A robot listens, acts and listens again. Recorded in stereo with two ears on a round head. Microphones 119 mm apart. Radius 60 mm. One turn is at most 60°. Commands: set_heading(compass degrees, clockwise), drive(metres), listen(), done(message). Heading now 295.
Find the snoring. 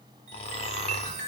set_heading(240)
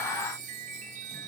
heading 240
listen()
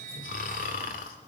set_heading(180)
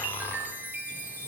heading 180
set_heading(165)
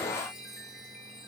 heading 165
listen()
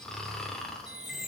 done("Found it: snoring, straight ahead.")